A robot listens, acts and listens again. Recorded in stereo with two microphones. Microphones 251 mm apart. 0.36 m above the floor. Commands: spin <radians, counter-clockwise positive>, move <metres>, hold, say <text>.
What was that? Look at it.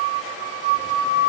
hold
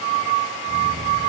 hold
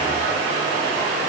say I can't make out anything to turn to.